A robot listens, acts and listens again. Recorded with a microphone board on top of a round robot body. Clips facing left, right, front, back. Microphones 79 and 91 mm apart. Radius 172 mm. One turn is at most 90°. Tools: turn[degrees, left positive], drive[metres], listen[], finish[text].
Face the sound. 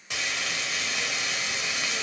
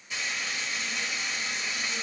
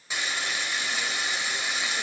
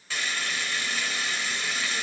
Thought: The frying: 75° left.
Action: turn[75]
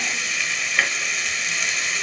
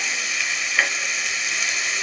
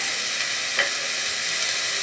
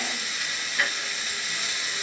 Action: finish[Found it: frying, straight ahead.]